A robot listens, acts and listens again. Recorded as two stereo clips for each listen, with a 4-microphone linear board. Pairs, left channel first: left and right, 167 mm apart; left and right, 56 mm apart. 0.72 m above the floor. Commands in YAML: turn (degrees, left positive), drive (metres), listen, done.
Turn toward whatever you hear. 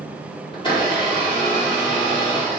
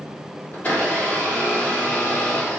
turn: 30
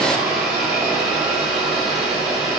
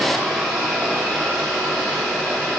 done: "Facing the blender, 1 to 2 m away."